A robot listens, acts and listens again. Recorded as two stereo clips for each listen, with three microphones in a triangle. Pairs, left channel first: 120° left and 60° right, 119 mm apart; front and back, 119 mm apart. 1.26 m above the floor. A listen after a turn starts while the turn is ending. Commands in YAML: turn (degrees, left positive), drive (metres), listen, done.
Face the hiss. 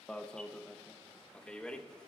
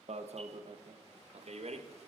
listen: true
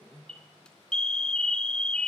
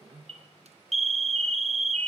listen: true
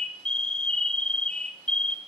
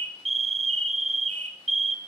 done: "I can't make out a hiss, only an alarm."